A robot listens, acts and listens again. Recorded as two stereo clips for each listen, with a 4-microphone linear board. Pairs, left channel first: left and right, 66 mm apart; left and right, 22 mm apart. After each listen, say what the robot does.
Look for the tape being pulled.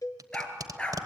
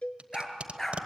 Turn 70° right.
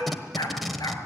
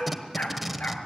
Found it: tape being pulled, straight ahead.